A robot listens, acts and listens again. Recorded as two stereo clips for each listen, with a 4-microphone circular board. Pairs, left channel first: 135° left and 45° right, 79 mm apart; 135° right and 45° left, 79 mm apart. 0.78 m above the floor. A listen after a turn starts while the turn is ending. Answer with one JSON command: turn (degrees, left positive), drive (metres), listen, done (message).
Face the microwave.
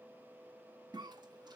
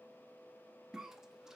{"listen": true}
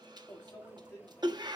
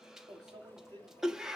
{"turn": 80}
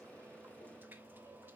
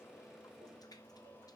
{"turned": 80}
{"turn": 10}
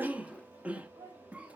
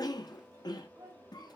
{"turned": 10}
{"done": "Found it: a microwave, straight ahead."}